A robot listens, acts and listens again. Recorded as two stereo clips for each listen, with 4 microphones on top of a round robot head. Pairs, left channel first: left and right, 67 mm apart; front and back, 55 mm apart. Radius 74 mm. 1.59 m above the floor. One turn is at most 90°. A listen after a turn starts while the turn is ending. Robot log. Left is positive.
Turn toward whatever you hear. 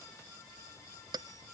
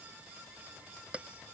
note: The bell: 110° right.
cmd yaw -90
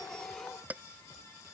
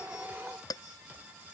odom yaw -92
note: The bell is now 15° right.
cmd yaw -15
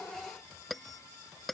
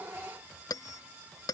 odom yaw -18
end: Found it: a bell, straight ahead.